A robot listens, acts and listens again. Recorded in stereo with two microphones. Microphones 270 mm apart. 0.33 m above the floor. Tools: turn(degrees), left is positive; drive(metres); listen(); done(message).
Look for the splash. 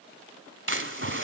turn(degrees=-45)
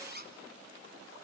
listen()
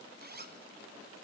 done("I heard a splash, but can't make it out now. It was about straight ahead or 90° right.")